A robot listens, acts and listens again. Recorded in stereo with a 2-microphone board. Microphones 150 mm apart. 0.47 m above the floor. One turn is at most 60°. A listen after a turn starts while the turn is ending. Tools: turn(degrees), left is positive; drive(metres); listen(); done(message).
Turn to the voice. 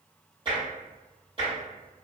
listen()
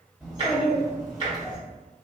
turn(degrees=30)
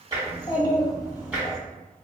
turn(degrees=60)
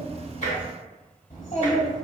turn(degrees=60)
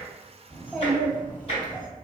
turn(degrees=15)
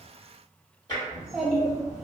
done("Found it: a child speaking, straight ahead, 1 to 2 m away.")